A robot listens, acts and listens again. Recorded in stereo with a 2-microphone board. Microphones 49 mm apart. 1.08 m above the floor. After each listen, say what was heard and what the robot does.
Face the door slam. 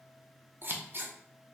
Keep listening.
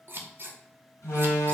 The door slam: about 70° left or 110° left. Turn 70° left.
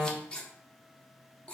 Facing the door slam.